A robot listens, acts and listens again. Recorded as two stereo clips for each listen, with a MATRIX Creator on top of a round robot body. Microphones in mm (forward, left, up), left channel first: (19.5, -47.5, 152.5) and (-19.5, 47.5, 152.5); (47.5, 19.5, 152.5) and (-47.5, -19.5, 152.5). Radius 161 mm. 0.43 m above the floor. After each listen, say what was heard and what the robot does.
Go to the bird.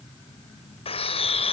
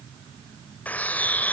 The bird: 50° right. Turn 50° right.
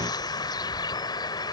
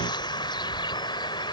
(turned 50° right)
The bird is now 20° right. Turn 20° right.
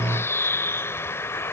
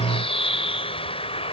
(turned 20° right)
Drive 1.0 m forward.
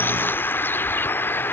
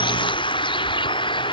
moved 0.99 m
Drive 1.0 m forward.
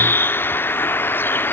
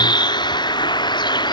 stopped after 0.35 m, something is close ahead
I am next to the bird.